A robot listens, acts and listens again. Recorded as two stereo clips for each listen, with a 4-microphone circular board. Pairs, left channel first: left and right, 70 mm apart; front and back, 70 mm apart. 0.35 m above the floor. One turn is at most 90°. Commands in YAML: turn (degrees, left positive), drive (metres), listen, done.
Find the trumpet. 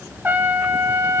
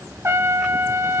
turn: -90
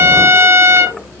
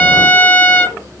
turn: -55
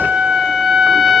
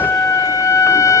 turn: -10
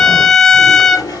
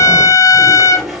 done: "Found it: a trumpet, straight ahead."